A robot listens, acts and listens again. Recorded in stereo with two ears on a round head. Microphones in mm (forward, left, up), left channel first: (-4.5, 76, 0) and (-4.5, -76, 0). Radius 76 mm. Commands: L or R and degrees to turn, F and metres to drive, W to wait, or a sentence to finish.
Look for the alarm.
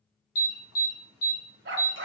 L75
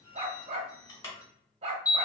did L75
L20
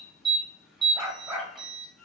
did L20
Found it: an alarm, straight ahead, 1 to 2 m away.